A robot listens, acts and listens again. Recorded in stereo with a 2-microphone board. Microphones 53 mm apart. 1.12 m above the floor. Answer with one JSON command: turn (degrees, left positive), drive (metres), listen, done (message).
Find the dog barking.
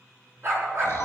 {"turn": -55}
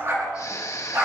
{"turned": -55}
{"turn": -60}
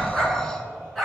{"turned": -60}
{"done": "Found it: a dog barking, straight ahead."}